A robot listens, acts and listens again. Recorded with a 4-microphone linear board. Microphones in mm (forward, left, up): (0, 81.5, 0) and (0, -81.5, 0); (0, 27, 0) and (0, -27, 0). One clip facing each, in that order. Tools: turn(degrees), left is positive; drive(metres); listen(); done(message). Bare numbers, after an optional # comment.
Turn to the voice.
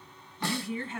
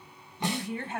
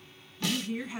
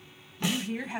# The woman speaking: about 65° right or 115° right.
turn(-65)
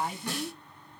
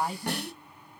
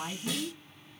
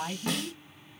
# So it is at 35° right.
turn(-35)
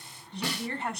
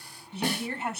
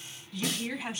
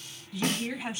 done("Facing the woman speaking, 2 to 4 m away.")